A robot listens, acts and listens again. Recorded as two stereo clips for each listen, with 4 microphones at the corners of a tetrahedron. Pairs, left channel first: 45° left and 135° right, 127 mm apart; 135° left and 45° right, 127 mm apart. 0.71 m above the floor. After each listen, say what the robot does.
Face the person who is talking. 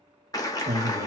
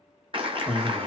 Turn 125° right.
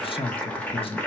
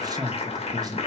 Turn 10° left.
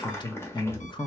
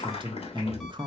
Found it: a man speaking, straight ahead.